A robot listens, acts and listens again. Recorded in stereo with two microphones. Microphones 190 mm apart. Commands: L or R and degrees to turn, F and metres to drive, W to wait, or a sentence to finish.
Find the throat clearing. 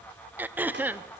R30
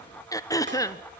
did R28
L20
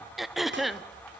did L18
Facing the throat clearing.